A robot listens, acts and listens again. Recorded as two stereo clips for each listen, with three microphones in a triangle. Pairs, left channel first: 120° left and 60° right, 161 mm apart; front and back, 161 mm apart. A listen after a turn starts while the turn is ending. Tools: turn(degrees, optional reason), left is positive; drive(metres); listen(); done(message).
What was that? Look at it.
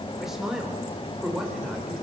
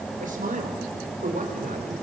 turn(degrees=-150, reason="The man speaking: 150° right.")
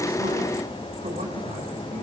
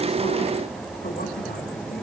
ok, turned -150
listen()
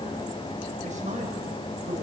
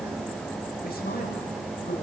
turn(degrees=-20, reason="The man speaking is now 20° right.")
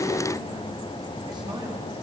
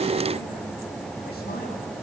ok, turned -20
listen()
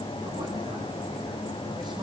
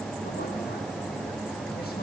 listen()
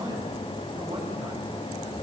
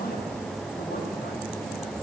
done("Facing the man speaking, over 4 m away.")